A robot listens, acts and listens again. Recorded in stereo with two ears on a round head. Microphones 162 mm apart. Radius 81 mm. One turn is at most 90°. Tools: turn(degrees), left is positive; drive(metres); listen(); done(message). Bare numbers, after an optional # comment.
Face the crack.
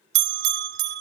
listen()
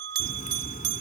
# The crack: about 45° left or 135° left.
turn(45)
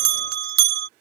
listen()
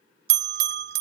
done("I heard a crack, but can't make it out now. It was about straight ahead or 90° left.")